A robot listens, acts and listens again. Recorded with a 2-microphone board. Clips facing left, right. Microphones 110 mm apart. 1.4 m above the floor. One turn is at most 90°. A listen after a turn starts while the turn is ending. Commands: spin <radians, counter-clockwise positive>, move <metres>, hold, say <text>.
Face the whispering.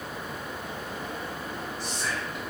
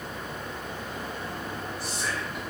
spin -0.52
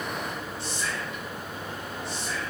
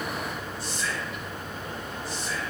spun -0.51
spin 0.44
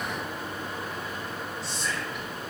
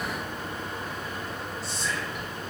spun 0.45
say Found it: whispering, straight ahead, 1 to 2 m away.